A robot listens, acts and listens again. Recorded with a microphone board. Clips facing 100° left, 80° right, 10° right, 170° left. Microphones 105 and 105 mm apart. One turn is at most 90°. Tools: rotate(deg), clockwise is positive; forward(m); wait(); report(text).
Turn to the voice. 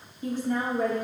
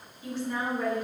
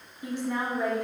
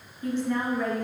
rotate(-65)
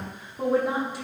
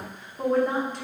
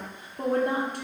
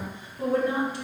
rotate(-20)
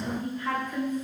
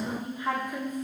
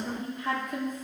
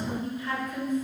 report("Facing the woman speaking, 1 to 2 m away.")